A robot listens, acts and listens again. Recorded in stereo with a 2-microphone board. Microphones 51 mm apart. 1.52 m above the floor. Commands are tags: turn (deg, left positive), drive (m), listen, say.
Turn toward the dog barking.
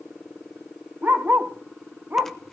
<turn deg="-35"/>
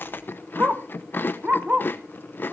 <turn deg="-30"/>
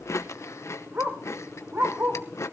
<turn deg="-130"/>
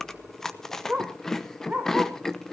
<turn deg="-25"/>
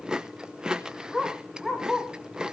<say>Facing the dog barking.</say>